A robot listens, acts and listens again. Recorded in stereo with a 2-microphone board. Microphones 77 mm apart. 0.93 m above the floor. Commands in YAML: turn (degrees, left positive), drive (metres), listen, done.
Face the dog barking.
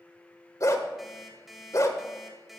turn: 45
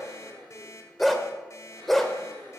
done: "Found it: a dog barking, straight ahead, 1 to 2 m away."